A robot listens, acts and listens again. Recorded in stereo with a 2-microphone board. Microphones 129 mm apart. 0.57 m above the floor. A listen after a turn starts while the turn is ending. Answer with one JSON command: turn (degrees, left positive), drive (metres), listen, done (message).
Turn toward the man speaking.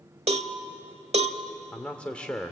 {"turn": 30}
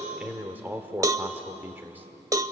{"turn": -20}
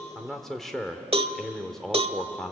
{"done": "Found it: a man speaking, straight ahead."}